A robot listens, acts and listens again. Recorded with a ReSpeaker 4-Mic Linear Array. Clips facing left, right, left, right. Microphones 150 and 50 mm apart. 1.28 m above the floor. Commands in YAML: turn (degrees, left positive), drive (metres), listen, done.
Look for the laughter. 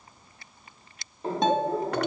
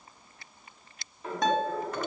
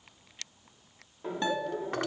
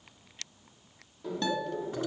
turn: 30
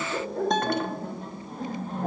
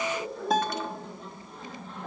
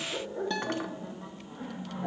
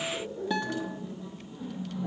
turn: 135
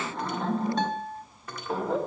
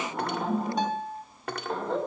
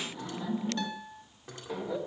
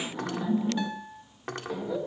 done: "Found it: laughter, straight ahead."